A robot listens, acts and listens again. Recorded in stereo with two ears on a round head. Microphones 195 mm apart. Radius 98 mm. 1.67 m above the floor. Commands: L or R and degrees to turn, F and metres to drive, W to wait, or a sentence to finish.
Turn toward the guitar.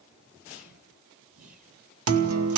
R90
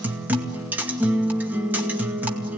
R10
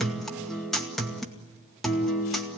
Found it: a guitar, straight ahead.